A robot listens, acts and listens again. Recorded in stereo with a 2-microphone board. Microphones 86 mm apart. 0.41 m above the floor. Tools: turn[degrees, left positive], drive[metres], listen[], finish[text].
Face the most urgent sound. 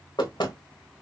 Action: listen[]
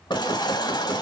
Thought: The baby crying: about 55° left or 125° left.
Action: turn[55]
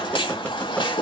Thought: So it is at 70° left.
Action: turn[70]
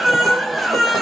Action: finish[Facing the baby crying, under 1 m away.]